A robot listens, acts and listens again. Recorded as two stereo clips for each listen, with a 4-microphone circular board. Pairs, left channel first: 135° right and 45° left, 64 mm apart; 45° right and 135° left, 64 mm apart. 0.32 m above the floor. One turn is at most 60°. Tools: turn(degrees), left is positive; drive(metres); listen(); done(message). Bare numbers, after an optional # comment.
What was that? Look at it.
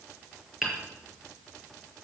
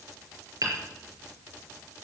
# The hammering: 130° left.
turn(60)
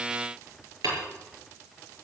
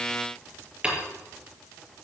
# The hammering is now 65° left.
turn(60)
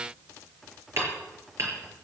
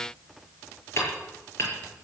done("Found it: hammering, straight ahead.")